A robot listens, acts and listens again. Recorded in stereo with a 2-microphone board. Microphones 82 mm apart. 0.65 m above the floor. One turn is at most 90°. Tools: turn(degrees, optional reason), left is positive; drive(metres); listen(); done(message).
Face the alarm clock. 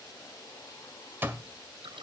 turn(degrees=-25, reason="The alarm clock: about 25° right or 155° right.")
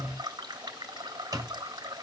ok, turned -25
turn(degrees=-90, reason="So it is at 130° right.")
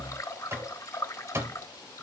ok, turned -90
turn(degrees=-35, reason="The alarm clock is now 35° right.")
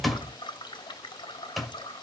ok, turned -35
done("Facing the alarm clock, 1 to 2 m away.")